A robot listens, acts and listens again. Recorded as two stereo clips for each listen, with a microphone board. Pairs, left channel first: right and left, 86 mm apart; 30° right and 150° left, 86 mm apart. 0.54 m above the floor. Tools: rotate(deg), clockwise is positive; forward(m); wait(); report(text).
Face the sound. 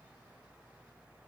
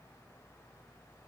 wait()
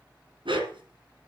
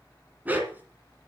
rotate(-80)
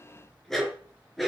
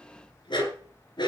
report("Facing the dog barking, 2 to 4 m away.")